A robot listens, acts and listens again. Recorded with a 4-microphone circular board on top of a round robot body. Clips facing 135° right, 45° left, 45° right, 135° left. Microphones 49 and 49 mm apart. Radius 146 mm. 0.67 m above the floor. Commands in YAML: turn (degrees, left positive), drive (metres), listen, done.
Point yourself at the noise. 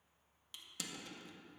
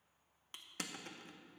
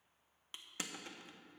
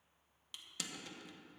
turn: 10
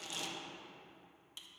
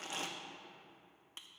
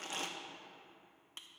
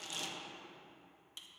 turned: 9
done: "Facing the crushing."